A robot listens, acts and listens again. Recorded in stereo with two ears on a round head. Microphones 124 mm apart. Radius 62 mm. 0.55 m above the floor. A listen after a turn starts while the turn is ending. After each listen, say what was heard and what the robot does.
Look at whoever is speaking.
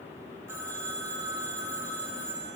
Keep listening.
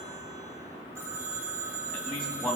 Turn 30° left.
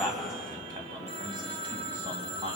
So it is at 35° right. Turn 35° right.
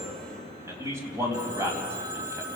The man speaking is now 20° right. Turn 20° right.
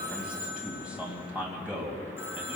The man speaking is now 10° right. Turn 10° right.
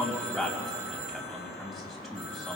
Facing the man speaking, 2 to 4 m away.